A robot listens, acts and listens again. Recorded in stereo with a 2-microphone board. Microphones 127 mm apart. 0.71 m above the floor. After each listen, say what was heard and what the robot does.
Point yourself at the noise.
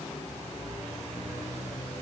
Keep listening.
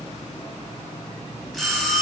Turn 30° left.
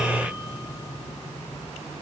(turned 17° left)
Keep listening.
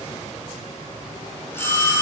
So it is at 160° left. Turn 160° left.
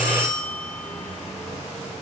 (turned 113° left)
The bell is now 45° left. Turn 45° left.
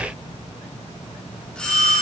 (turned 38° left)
Facing the bell, 2 to 4 m away.